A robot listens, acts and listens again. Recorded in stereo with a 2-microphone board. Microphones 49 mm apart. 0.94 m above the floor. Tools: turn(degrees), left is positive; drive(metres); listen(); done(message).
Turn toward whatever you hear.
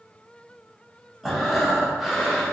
turn(degrees=-30)
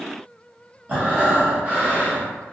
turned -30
turn(degrees=-145)
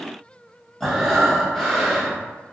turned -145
turn(degrees=10)
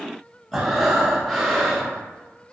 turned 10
done("Facing the breathing, under 1 m away.")